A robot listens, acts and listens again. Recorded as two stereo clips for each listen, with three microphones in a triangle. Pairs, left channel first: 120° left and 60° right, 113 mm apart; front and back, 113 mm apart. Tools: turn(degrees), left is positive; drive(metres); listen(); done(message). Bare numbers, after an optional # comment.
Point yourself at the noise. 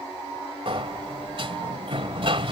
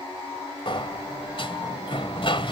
# The sliding door: 30° right.
turn(-30)
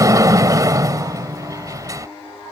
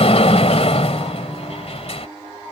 done("Facing the sliding door.")